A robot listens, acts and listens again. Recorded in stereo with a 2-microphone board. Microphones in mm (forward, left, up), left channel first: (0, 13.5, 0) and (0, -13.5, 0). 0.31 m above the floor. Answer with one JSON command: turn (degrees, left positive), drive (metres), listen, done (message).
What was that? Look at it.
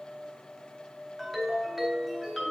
{"turn": -30}
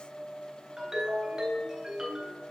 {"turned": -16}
{"turn": -160}
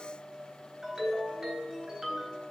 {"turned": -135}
{"turn": -25}
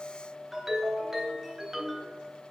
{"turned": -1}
{"turn": -20}
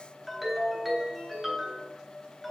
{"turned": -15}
{"done": "Facing the ringtone."}